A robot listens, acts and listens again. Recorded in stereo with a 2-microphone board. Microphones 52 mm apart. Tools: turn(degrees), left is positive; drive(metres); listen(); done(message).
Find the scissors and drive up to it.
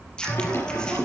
turn(degrees=15)
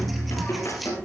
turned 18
listen()
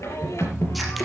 listen()
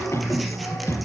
done("I heard scissors, but can't make it out now. It was about straight ahead or 145° left. I did not reach it.")